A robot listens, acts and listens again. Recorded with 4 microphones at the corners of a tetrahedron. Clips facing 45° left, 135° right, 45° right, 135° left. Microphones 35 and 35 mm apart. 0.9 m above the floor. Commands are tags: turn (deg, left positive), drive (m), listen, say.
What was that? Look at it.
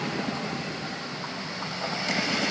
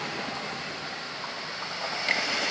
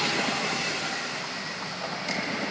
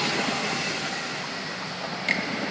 <listen/>
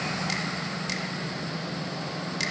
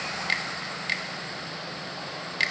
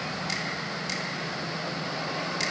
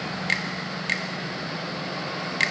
<turn deg="170"/>
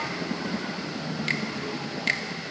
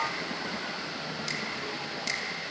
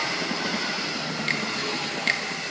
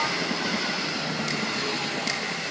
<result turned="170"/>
<say>Facing the finger snap.</say>